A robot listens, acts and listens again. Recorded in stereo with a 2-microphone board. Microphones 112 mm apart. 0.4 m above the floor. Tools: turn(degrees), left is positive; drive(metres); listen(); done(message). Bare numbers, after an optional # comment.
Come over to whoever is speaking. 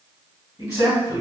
# The man speaking: about 35° left or 145° left.
turn(35)
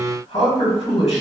# So it is at 110° left.
turn(110)
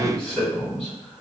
# The man speaking is now 10° left.
turn(10)
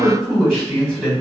drive(1.0)
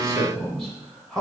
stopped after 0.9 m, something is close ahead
done("Arrived at the man speaking, straight ahead.")